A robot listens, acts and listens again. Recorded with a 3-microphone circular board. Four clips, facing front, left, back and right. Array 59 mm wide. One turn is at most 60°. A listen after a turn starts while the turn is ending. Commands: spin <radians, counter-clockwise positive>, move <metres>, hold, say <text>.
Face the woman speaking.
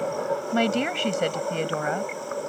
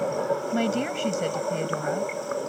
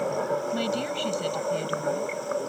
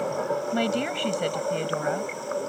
spin -0.17
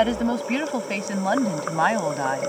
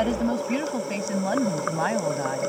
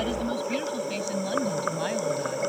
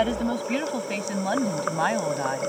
spin -0.17
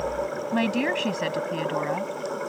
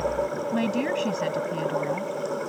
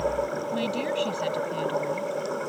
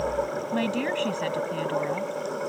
say Found it: a woman speaking, straight ahead.